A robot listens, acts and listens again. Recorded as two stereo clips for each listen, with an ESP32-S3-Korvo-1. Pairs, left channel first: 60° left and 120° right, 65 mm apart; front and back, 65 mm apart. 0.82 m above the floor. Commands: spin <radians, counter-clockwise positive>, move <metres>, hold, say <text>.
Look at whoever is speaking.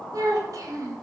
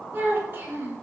spin -2.18
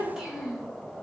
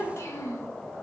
spin -0.61
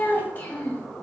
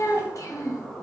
say Found it: a child speaking, straight ahead, under 1 m away.